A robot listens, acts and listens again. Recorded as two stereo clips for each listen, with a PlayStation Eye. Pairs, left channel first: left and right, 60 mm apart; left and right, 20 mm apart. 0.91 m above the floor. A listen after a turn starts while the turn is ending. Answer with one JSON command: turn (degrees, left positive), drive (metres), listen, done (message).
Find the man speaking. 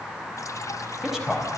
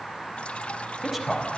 {"turn": -30}
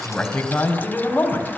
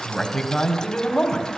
{"turn": 25}
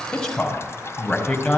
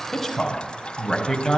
{"turn": 10}
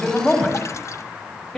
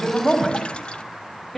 {"done": "Found it: a man speaking, straight ahead."}